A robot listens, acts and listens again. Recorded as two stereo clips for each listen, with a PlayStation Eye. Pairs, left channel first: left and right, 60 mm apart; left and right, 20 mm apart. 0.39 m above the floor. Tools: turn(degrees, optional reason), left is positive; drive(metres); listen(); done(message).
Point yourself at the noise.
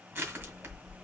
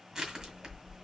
turn(degrees=-40, reason="The crushing: about 40° right or 140° right.")
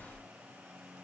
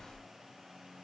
done("Facing the crushing, 2 to 4 m away.")